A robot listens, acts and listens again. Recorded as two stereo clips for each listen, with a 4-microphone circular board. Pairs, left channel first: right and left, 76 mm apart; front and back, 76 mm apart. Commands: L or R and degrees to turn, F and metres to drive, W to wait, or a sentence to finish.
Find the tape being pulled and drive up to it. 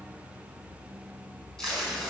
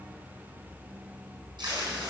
L180
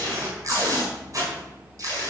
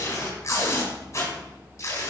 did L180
L50
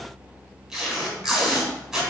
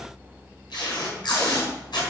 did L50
F1.0
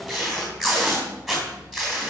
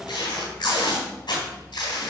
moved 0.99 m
F1.0
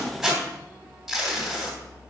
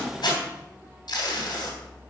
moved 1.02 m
F1.0
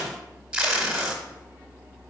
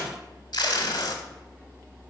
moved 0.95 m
L10
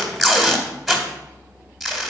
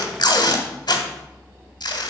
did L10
F1.0
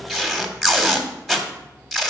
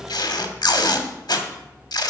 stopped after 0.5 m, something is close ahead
Arrived at the tape being pulled, straight ahead.